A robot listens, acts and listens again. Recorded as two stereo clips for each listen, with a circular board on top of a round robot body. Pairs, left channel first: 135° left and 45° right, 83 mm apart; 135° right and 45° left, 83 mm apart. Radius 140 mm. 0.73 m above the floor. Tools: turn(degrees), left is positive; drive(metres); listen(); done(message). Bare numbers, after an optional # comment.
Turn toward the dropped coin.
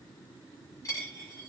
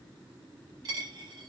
# The dropped coin: 85° left.
turn(85)
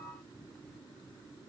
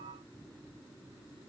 done("Facing where the dropped coin came from. I can't hear it now.")